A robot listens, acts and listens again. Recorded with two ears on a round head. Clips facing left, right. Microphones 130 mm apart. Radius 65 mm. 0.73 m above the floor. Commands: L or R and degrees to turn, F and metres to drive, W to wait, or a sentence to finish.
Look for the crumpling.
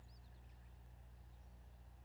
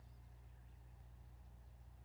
W
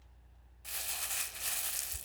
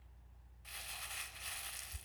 L55
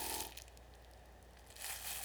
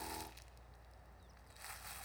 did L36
L35
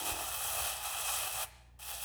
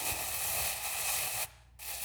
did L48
R15
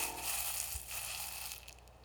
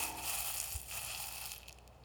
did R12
Facing the crumpling.